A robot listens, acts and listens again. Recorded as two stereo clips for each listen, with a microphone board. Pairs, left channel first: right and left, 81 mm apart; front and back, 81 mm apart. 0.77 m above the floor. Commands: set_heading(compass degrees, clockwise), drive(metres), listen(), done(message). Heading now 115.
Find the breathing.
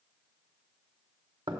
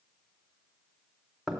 listen()
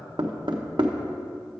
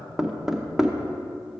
listen()
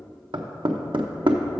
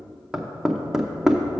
done("I can't make out breathing, only knocking.")